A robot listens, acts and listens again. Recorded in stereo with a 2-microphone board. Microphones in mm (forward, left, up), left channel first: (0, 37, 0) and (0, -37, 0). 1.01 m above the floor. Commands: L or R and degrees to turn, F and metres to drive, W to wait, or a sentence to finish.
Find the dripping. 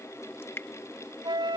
L30
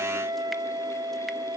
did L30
W
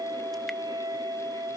W
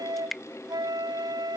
Facing the dripping.